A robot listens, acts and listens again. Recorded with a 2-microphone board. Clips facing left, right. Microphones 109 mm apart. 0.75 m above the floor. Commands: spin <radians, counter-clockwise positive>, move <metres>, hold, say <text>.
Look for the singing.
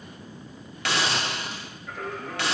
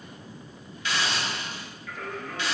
spin 0.52
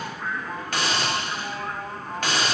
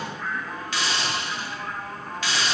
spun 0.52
spin 0.35
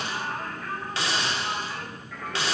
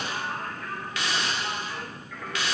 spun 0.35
spin 0.17
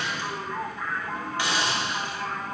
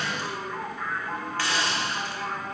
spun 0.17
say Found it: singing, straight ahead.